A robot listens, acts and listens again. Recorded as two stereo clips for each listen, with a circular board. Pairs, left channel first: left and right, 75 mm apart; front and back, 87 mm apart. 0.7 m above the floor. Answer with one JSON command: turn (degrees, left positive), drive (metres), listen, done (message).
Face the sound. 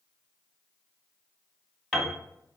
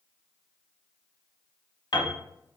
{"done": "Found it: a piano, straight ahead."}